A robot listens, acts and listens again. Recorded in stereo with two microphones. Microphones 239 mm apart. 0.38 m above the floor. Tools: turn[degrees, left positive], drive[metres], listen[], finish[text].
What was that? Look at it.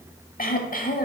Thought: The throat clearing: about 35° left or 145° left.
Action: turn[35]
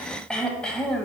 Action: finish[Found it: throat clearing, straight ahead.]